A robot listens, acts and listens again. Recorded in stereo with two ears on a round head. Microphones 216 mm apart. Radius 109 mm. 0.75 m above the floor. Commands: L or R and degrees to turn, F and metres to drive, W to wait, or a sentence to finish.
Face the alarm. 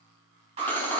R25
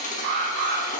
R130
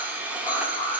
L25
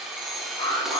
L20
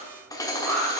Found it: an alarm, straight ahead, 1 to 2 m away.